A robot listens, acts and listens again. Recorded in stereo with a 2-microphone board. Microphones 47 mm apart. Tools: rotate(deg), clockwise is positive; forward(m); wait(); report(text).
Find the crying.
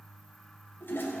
wait()
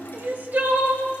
rotate(40)
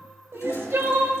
rotate(90)
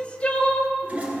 rotate(-35)
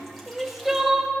report("Facing the crying, 1 to 2 m away.")